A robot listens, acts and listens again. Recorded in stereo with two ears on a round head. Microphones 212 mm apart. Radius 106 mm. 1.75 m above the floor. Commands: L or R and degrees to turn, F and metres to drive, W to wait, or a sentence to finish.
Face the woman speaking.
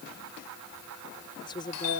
L20
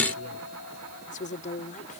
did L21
L35
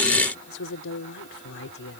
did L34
L125
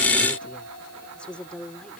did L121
Found it: a woman speaking, straight ahead.